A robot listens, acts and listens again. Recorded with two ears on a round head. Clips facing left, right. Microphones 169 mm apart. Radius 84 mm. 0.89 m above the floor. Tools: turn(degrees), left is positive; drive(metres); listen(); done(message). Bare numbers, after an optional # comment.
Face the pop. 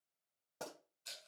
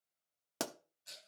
turn(-90)
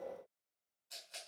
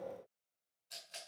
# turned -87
done("Facing where the pop came from. I can't hear it now.")